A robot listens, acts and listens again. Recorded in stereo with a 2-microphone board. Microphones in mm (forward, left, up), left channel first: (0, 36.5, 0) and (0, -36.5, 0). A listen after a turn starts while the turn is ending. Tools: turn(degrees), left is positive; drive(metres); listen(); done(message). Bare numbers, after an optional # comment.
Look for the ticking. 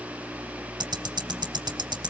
turn(-90)
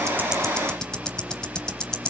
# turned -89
# So it is at 10° left.
turn(10)
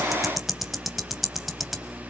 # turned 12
done("Facing the ticking.")